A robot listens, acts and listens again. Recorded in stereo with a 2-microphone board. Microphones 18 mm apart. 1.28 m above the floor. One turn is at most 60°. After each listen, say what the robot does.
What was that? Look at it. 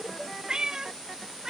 Turn 30° right.
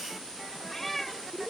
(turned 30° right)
Turn 10° left.
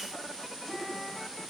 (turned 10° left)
Keep listening.
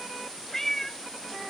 Turn 20° left.
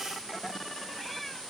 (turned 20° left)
Keep listening.
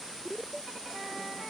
Keep listening.
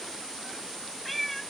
Turn 10° left.
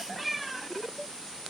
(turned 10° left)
Facing the cat meowing.